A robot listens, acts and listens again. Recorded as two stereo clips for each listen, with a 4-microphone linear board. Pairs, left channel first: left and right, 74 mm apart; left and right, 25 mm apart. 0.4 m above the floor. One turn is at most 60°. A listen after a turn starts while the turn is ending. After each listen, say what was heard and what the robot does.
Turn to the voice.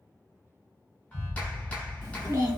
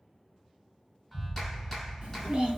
The child speaking: about 55° right or 125° right. Turn 55° right.
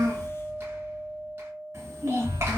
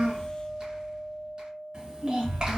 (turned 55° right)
So it is at 50° right. Turn 50° right.
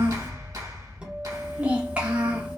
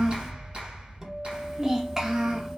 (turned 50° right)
The child speaking is now 25° right. Turn 25° right.
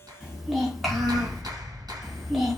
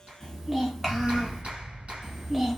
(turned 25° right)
Found it: a child speaking, straight ahead, under 1 m away.